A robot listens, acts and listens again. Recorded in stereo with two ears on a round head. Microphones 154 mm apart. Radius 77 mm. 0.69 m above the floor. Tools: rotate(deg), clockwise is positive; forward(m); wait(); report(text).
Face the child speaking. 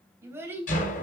rotate(30)
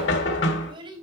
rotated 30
rotate(155)
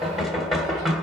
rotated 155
wait()
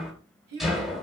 rotate(65)
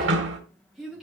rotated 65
report("Found it: a child speaking, straight ahead.")